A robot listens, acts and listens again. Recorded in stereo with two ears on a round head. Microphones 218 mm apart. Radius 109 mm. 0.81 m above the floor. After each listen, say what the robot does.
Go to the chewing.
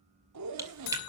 Turn 30° right.
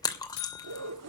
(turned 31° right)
Turn 15° left.
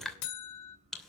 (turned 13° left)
Drive 1.0 m forward.
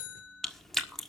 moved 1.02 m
Drive 1.0 m forward.
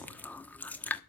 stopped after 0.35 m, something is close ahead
Turn 10° left.
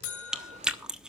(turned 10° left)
Arrived at the chewing, straight ahead.